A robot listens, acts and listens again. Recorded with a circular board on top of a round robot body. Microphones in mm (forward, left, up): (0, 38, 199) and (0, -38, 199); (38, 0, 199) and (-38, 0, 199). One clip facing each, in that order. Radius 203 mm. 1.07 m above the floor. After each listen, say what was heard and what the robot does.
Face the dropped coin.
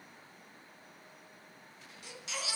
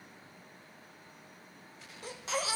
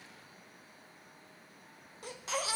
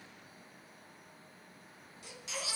Keep listening.
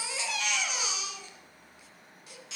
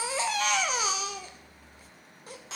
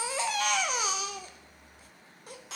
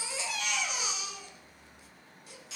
Keep listening.
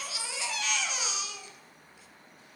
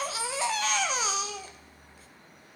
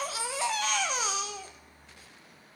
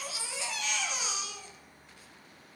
I can't make out a dropped coin, only a baby crying.